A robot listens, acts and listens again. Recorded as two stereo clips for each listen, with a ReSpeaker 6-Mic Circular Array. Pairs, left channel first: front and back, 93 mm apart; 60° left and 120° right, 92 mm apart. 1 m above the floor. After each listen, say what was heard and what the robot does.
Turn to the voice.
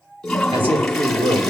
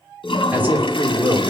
The man speaking: 170° left. Turn 170° left.
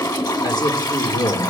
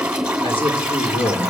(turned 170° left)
The man speaking is now 40° left. Turn 40° left.
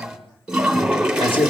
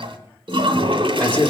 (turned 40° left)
The man speaking is now 15° right. Turn 15° right.
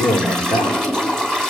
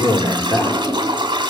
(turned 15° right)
Facing the man speaking.